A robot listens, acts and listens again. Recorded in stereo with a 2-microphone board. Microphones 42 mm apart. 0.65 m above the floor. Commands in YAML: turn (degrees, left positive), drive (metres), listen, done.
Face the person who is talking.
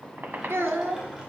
turn: -75
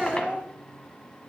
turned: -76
turn: -25
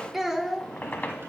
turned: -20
done: "Found it: a child speaking, straight ahead, under 1 m away."